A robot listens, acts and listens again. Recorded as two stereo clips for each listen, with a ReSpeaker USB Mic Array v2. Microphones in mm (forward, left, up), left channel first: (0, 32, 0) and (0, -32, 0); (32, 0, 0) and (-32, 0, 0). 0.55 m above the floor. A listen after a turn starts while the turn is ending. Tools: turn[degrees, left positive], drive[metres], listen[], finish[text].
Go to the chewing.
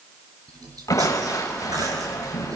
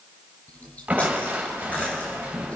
Thought: The chewing: 65° right.
Action: turn[-65]
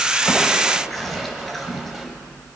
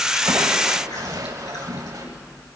Action: drive[1.0]
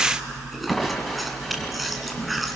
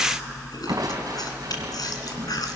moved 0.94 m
Action: drive[1.0]
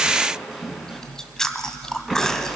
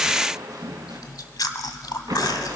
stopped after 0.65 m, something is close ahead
Thought: The chewing is now 10° left.
Action: turn[10]
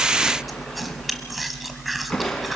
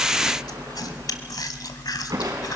Action: finish[Arrived at the chewing, straight ahead.]